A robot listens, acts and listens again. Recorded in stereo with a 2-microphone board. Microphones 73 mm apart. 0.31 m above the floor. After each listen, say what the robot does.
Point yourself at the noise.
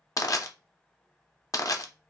Turn 50° left.
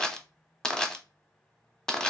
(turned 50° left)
Turn 10° left.
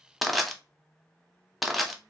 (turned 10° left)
Facing the crushing, under 1 m away.